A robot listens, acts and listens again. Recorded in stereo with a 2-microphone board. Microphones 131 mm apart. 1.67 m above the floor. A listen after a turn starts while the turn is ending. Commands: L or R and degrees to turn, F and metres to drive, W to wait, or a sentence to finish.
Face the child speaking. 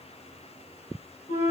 W
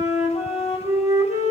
W
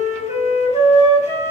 I can't make out a child speaking, only a flute.